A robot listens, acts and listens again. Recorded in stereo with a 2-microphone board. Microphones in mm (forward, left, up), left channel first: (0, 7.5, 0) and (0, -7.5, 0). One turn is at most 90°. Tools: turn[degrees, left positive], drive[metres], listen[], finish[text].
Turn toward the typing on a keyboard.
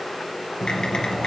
Action: turn[90]
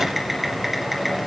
Thought: So it is at 10° right.
Action: turn[-10]
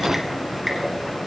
Action: finish[Found it: typing on a keyboard, straight ahead, 2 to 4 m away.]